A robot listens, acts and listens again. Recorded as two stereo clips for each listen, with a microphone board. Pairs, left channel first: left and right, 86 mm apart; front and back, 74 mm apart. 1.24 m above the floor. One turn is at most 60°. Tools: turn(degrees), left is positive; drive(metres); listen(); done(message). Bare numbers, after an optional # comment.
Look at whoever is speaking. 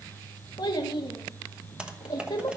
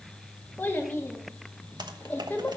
# The child speaking: 65° left.
turn(60)
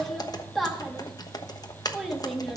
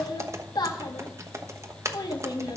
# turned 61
done("Facing the child speaking, 1 to 2 m away.")